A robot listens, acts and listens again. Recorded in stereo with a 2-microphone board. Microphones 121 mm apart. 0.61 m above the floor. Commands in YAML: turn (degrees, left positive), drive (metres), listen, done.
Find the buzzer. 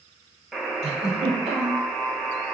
turn: 30
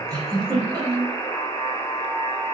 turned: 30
turn: 150
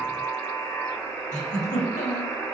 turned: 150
turn: 20
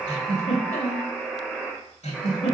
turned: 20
done: "Facing the buzzer."